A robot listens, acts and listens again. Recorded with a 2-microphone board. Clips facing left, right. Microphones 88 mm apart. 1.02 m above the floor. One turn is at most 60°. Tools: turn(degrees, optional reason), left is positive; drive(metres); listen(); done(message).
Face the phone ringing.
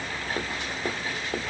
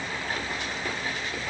listen()
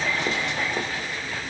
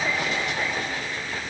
listen()
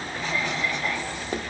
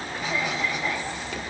done("I can't make out a phone ringing to turn to.")